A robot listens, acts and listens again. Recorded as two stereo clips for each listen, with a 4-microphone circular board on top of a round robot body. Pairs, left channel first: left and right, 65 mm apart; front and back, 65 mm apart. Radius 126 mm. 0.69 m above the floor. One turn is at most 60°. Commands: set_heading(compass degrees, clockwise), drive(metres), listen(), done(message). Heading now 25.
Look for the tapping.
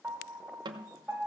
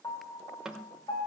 set_heading(85)
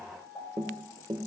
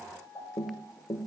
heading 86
set_heading(121)
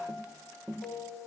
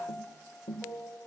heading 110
set_heading(120)
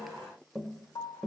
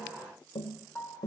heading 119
done("Found it: tapping, straight ahead.")